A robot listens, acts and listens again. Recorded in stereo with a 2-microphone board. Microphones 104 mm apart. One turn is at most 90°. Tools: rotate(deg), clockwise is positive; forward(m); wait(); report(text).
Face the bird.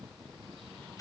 wait()
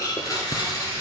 wait()
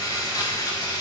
report("I can't make out a bird to turn to.")